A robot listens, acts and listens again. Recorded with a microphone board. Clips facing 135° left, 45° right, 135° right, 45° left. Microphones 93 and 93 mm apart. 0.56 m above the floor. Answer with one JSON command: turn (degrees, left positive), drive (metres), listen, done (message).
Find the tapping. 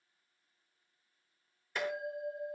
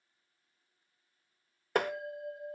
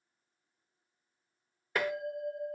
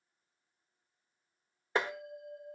{"turn": -15}
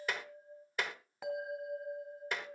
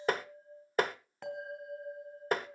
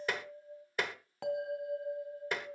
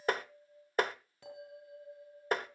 {"done": "Found it: tapping, straight ahead, 1 to 2 m away."}